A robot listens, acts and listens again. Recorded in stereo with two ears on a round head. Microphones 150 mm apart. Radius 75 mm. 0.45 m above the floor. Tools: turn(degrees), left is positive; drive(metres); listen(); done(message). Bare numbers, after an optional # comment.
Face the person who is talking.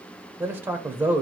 turn(-30)
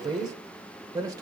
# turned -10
# The man speaking: about 25° right or 155° right.
turn(-25)
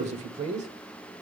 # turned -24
# So it is at 125° right.
turn(-125)
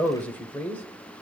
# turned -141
# The man speaking is now 10° left.
turn(10)
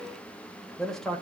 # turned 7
done("Found it: a man speaking, straight ahead, 1 to 2 m away.")